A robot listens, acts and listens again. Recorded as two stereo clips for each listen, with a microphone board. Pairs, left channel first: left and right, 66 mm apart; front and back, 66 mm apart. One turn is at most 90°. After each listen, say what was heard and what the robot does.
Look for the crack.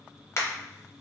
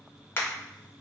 The crack: 50° left. Turn 50° left.
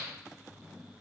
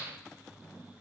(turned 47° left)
I heard a crack from this way, but can't make it out now.